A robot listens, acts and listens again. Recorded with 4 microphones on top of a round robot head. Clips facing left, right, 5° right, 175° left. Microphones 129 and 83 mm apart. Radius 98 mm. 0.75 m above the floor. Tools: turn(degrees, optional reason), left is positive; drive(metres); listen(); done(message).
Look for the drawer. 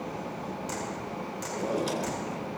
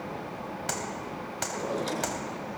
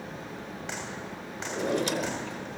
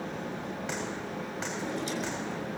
turn(degrees=10, reason="The drawer: 10° left.")
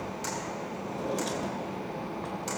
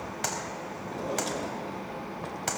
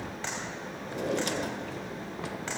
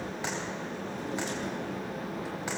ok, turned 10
done("Found it: a drawer, straight ahead.")